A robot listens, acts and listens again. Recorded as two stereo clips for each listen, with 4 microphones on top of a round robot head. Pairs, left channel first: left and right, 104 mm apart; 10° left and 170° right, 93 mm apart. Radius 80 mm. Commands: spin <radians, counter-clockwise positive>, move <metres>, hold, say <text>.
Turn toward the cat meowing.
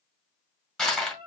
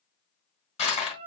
spin -2.44
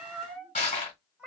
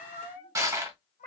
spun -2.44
spin -0.17
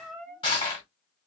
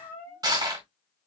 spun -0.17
say Facing the cat meowing, 1 to 2 m away.